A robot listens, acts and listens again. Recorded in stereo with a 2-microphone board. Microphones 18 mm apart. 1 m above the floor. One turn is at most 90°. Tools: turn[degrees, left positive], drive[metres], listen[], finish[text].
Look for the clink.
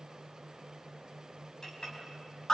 Thought: The clink: about 45° left or 135° left.
Action: turn[45]
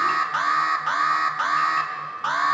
Action: listen[]
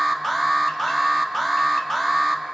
Action: listen[]
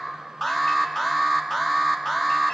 Action: finish[I heard a clink, but can't make it out now. It was about straight ahead or 90° left.]